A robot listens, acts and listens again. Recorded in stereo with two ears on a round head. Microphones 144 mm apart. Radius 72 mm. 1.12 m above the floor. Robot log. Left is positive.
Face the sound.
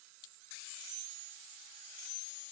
cmd idle
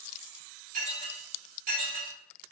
note: The dishes clattering: about 60° right or 120° right.
cmd yaw -60
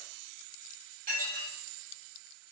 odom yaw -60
note: So it is at 60° right.
cmd yaw -60
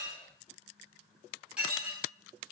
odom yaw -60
note: The dishes clattering is now 10° right.
cmd yaw -10
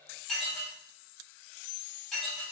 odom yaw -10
end: Facing the dishes clattering, 2 to 4 m away.